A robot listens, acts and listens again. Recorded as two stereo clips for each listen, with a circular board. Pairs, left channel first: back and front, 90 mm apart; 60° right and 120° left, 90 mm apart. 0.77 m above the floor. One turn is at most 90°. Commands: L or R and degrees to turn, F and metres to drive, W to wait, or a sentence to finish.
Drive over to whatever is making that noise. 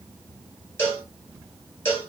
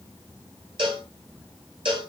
L90
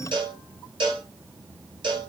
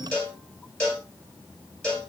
L15
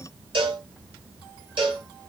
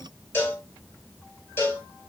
F1.0
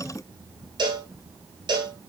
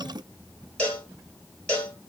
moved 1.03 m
L10
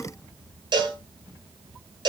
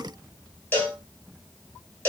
F1.0
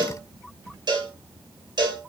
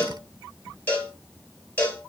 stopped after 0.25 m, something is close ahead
Arrived at the cowbell, straight ahead.